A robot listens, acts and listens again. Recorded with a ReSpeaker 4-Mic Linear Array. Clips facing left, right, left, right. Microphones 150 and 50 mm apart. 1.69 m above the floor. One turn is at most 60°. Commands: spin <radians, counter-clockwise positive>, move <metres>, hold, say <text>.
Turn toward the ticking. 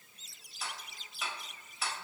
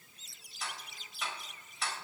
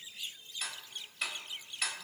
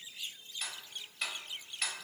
spin 0.52
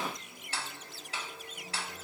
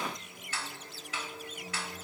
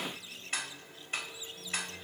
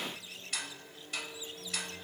spin 1.05
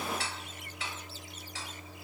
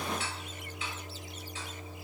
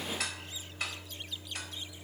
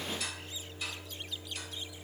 spin 1.05
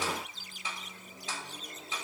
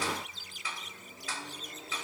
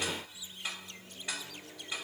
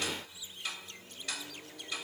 spin 0.44
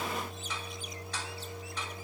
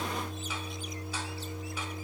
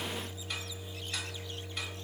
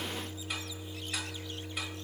hold
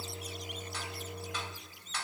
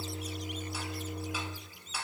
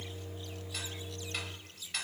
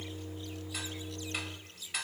say Found it: ticking, straight ahead.